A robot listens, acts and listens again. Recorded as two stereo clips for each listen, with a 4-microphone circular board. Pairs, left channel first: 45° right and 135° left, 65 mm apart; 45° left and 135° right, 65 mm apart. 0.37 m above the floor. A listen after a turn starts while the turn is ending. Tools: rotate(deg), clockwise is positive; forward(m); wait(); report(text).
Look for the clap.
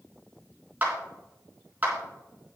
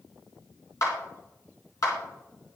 rotate(-70)
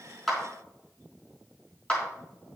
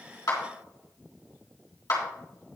rotate(-25)
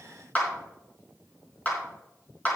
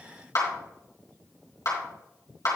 rotate(-15)
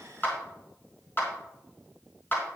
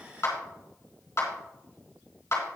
report("Facing the clap, 2 to 4 m away.")